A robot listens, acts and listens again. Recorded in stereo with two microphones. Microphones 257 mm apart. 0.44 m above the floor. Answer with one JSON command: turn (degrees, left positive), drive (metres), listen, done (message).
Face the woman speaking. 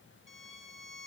{"listen": true}
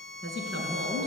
{"turn": -50}
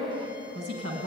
{"turn": -75}
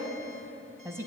{"turn": -10}
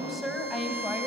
{"done": "Facing the woman speaking, 2 to 4 m away."}